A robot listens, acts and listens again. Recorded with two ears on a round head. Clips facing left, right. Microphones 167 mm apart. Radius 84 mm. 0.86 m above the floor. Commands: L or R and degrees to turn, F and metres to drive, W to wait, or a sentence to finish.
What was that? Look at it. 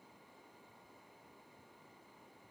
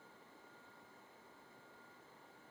W
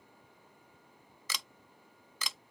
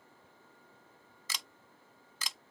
L75
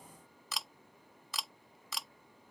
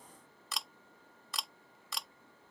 Facing the camera shutter.